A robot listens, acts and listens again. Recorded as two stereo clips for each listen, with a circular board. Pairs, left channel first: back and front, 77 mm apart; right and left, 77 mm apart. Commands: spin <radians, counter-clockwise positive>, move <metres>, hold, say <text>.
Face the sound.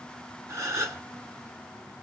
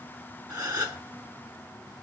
spin 0.79
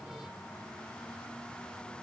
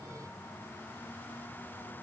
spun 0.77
say Facing where the gasp came from. I can't hear it now.